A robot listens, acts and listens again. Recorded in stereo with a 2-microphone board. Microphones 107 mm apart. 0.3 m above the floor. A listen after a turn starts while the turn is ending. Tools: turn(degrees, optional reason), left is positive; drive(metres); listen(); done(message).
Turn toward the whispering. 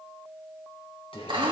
turn(degrees=60, reason="The whispering: about 60° left or 120° left.")
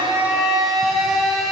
listen()
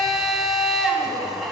listen()
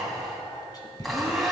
turn(degrees=45, reason="So it is at 45° left.")
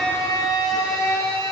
listen()
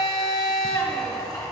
listen()
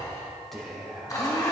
done("Facing the whispering, 2 to 4 m away.")